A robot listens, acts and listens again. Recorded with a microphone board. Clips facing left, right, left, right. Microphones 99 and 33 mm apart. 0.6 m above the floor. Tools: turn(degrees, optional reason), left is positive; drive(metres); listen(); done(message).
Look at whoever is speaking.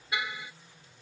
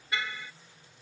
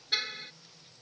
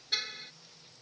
listen()
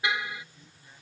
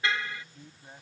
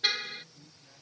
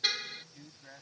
turn(degrees=-50, reason="The man speaking: about 50° right or 130° right.")
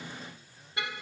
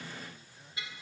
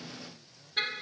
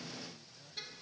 listen()
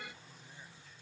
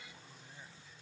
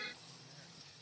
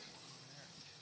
listen()
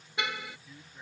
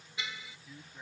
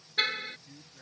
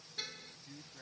done("Facing the man speaking.")